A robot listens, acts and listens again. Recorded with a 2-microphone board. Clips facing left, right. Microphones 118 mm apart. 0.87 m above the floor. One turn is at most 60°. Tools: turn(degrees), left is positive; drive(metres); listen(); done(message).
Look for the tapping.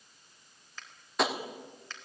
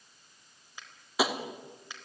turn(degrees=-30)
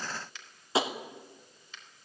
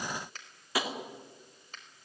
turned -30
turn(degrees=25)
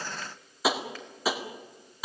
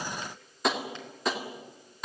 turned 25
done("Facing the tapping.")